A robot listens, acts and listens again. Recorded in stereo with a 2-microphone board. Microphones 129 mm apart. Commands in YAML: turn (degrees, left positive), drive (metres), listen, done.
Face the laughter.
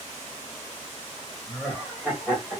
turn: -30
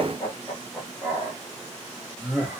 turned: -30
turn: 30
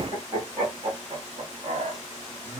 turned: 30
turn: -40
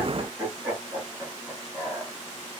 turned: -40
done: "Facing the laughter."